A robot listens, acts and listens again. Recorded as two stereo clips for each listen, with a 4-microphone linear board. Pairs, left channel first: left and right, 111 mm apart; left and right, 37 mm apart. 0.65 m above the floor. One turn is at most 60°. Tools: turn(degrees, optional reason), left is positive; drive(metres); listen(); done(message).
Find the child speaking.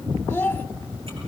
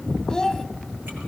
turn(degrees=15, reason="The child speaking: about 15° left or 165° left.")
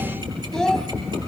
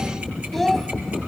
done("Found it: a child speaking, straight ahead, under 1 m away.")